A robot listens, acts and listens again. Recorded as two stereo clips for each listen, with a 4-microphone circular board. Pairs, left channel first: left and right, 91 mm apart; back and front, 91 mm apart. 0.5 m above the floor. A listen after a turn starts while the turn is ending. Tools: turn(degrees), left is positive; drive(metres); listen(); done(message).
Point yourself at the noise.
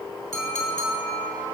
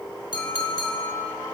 turn(degrees=140)
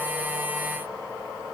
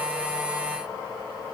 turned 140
listen()
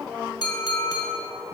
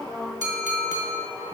turn(degrees=45)
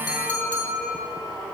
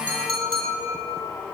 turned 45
turn(degrees=20)
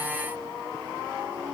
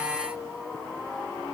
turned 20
listen()
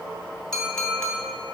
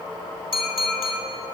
turn(degrees=10)
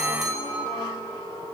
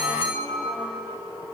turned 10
done("Found it: a clink, straight ahead, 1 to 2 m away.")